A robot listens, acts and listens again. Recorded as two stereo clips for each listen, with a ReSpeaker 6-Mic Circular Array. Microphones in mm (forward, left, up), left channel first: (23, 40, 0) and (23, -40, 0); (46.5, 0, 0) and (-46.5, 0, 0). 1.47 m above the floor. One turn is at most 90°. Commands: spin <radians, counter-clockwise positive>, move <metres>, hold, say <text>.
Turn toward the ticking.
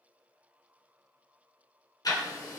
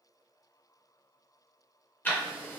spin 1.13
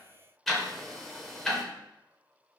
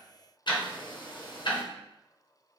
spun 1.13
say Facing the ticking.